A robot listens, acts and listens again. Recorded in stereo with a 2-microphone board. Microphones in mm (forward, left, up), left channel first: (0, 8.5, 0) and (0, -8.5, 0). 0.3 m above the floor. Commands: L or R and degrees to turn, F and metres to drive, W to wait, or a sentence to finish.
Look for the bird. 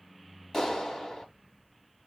W
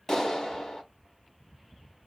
W
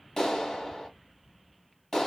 I can't make out a bird, only a clap.